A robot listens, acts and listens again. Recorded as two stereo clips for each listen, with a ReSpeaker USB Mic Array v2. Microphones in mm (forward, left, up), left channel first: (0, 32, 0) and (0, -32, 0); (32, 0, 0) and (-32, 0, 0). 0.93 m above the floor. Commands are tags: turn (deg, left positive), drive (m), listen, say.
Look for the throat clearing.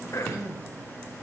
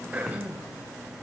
<turn deg="115"/>
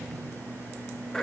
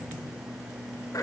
<turn deg="10"/>
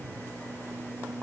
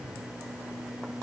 <listen/>
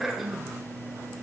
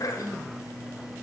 <say>Facing the throat clearing, 1 to 2 m away.</say>